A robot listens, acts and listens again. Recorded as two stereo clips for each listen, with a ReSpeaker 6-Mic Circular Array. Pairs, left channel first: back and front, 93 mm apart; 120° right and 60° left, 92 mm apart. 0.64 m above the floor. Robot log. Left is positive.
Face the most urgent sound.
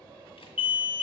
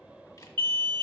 note: The alarm: 70° left.
cmd yaw +70
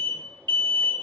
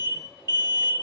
end: Facing the alarm, 1 to 2 m away.